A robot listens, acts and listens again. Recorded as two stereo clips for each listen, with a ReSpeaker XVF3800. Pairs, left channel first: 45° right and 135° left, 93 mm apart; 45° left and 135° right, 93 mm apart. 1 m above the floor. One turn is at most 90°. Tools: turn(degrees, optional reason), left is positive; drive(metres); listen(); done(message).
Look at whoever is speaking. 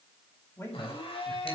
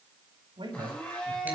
turn(degrees=-90, reason="The man speaking: 110° right.")
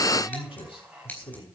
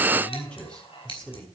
turn(degrees=-35, reason="The man speaking is now 35° right.")
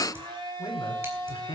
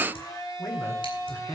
turn(degrees=-10, reason="The man speaking is now 10° right.")
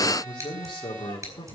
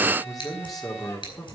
done("Facing the man speaking, 2 to 4 m away.")